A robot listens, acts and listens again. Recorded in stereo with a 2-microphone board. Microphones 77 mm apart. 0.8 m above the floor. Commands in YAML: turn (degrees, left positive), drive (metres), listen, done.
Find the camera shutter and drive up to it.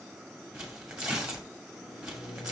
listen: true
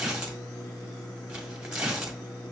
listen: true
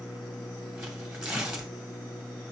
done: "I can't make out a camera shutter to turn to."